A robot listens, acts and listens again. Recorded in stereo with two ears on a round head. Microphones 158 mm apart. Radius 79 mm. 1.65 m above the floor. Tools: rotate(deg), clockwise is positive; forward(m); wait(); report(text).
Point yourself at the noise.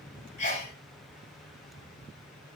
rotate(-40)
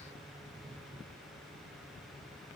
wait()
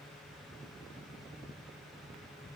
report("I heard a sneeze, but can't make it out now. It was about straight ahead or 100° left.")